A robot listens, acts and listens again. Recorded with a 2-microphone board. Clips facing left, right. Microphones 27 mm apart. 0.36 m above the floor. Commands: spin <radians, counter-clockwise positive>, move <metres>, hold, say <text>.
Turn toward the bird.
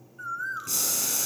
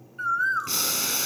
spin -1.05
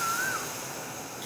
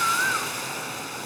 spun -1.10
spin -0.70
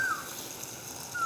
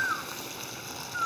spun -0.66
say Facing the bird.